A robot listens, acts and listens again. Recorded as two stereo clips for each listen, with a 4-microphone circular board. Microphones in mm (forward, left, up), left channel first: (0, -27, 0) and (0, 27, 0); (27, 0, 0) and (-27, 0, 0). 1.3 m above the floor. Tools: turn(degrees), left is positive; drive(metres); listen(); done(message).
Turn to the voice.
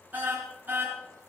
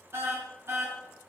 listen()
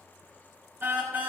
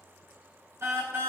listen()
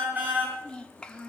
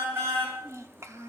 turn(degrees=-160)
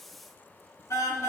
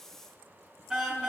listen()
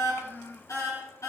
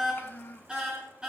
turn(degrees=-50)
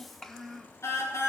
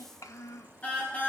done("Facing the child speaking, 1 to 2 m away.")